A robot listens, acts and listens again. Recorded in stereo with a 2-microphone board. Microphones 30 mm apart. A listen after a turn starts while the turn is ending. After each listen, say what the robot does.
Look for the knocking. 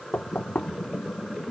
Turn 60° left.
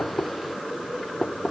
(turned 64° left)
Facing the knocking, 1 to 2 m away.